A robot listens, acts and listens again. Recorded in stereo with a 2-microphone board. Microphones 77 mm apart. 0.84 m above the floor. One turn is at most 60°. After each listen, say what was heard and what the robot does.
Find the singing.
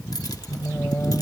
The singing: about 30° left or 150° left. Turn 30° left.
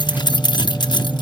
So it is at 15° left. Turn 15° left.
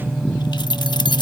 The singing is now 10° left. Turn 10° left.
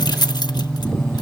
Facing the singing.